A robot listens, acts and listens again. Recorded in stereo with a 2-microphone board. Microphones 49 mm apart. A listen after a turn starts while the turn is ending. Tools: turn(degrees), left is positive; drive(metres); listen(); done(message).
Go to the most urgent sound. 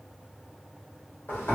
listen()
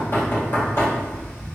listen()
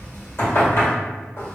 done("I can't make out anything urgent to turn to.")